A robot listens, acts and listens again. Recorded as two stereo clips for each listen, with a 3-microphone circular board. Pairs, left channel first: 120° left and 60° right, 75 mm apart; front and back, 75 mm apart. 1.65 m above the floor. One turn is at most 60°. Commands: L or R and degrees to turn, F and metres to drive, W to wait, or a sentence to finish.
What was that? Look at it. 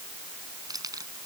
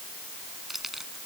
R60
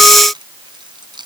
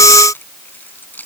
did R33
R60
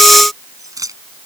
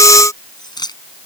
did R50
R20
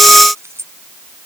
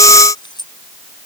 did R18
Found it: keys jangling, straight ahead.